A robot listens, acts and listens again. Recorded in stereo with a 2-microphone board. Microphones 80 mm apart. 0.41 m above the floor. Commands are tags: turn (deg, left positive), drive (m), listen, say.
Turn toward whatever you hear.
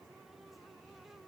<listen/>
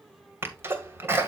<turn deg="-30"/>
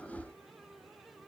<listen/>
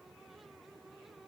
<say>I heard a sneeze, but can't make it out now. It was about straight ahead or 120° right.</say>